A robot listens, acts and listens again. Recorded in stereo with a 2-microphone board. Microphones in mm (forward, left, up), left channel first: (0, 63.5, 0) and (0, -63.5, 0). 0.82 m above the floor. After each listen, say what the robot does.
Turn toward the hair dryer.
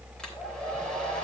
Turn 30° left.
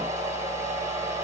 Turn 25° right.
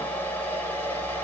Turn 15° left.
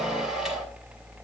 Found it: a hair dryer, straight ahead, 2 to 4 m away.